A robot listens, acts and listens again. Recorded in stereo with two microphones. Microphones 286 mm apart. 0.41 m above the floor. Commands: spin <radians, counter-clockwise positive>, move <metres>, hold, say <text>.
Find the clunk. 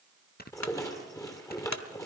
spin 1.57
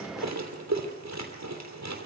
say I heard a clunk from this way, but can't make it out now.